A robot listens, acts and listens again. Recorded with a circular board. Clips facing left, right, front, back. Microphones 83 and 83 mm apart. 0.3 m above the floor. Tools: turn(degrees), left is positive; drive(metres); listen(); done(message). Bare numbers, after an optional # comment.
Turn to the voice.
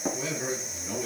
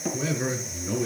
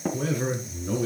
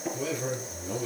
# The man speaking: 25° right.
turn(-25)
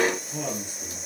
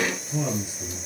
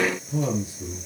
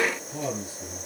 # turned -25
# The man speaking is now 10° right.
turn(-10)
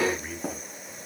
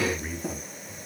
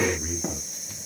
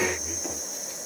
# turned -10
done("Facing the man speaking, over 4 m away.")